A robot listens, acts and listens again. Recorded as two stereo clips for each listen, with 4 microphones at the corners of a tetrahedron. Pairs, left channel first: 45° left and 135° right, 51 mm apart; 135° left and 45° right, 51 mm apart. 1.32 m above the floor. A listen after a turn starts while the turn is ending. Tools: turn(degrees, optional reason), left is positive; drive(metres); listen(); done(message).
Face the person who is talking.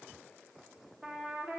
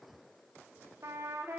listen()
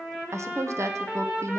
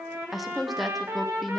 turn(degrees=-135, reason="The woman speaking: 135° right.")
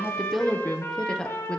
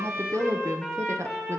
turn(degrees=-30, reason="The woman speaking is now 30° right.")
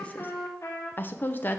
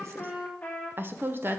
done("Found it: a woman speaking, straight ahead.")